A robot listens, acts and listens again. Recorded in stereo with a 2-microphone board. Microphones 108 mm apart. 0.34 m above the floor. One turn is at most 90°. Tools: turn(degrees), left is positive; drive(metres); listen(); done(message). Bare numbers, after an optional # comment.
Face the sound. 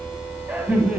turn(-30)
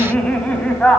# So it is at 10° left.
turn(10)
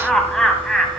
done("Facing the laughter, 2 to 4 m away.")